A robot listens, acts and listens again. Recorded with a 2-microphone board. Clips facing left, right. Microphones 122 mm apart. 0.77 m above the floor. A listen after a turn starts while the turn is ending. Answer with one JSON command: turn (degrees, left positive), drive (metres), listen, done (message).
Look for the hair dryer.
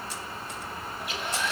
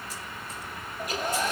{"turn": -40}
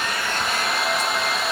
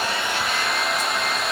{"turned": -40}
{"done": "Found it: a hair dryer, straight ahead, under 1 m away."}